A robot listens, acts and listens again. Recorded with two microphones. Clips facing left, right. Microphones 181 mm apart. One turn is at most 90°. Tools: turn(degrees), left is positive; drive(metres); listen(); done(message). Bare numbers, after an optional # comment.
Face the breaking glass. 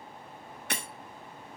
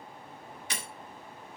# The breaking glass: about 60° left or 120° left.
turn(60)
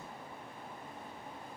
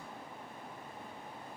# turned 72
listen()
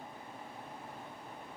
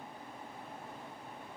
done("I heard breaking glass, but can't make it out now. It was about 10° right or 45° left.")